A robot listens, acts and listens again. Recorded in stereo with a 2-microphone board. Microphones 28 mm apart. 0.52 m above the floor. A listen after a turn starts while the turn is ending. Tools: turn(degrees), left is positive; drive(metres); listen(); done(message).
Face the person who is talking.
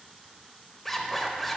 listen()
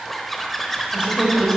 turn(degrees=-35)
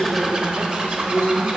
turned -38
turn(degrees=-125)
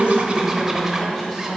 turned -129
done("Facing the woman speaking, 2 to 4 m away.")